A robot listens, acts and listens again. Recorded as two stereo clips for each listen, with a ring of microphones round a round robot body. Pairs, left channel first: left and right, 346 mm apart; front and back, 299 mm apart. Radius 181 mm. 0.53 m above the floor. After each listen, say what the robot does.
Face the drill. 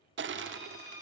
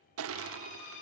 Turn 10° right.
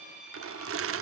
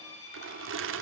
Found it: a drill, straight ahead, over 4 m away.